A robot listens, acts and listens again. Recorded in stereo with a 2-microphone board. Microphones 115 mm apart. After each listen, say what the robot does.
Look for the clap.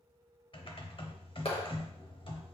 Turn 55° left.
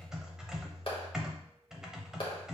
Turn 55° left.
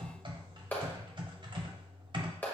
Turn 15° left.
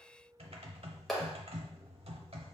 Found it: a clap, straight ahead.